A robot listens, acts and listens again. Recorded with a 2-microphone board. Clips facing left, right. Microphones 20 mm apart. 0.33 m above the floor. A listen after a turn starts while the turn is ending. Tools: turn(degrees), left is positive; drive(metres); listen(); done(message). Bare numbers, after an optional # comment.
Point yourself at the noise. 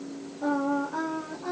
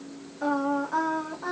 # The singing: about 75° right or 105° right.
turn(-75)
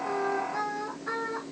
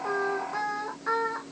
# So it is at 40° right.
turn(-40)
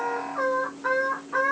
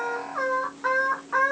# The singing is now 35° right.
turn(-35)
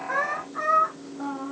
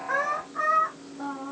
done("Facing the singing, 2 to 4 m away.")